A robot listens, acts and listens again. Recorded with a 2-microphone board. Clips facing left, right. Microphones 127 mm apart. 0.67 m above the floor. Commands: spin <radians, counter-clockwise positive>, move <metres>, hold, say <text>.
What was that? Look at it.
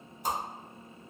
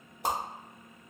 spin -1.22
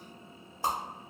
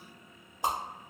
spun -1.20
spin -0.35
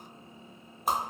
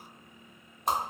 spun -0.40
say Facing the whoosh, under 1 m away.